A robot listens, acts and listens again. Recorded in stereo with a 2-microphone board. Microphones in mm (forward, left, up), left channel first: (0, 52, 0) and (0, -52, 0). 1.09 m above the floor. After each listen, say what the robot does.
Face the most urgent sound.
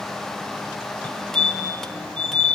Turn 30° left.
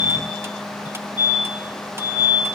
Turn 135° left.
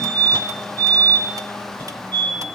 Turn 15° left.
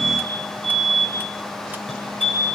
Found it: a fire alarm, straight ahead.